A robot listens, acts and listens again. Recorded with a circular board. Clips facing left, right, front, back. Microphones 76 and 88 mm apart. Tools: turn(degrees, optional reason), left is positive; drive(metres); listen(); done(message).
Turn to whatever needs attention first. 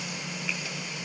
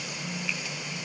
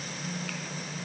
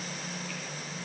listen()
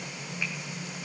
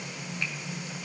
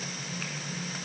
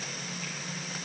listen()
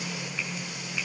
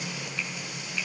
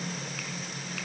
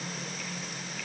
done("I can't make out anything urgent.")